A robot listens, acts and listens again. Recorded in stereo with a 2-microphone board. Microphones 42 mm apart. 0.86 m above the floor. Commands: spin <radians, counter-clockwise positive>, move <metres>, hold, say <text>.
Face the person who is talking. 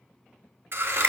hold
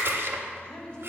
spin 0.26
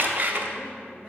say Found it: a woman speaking, straight ahead.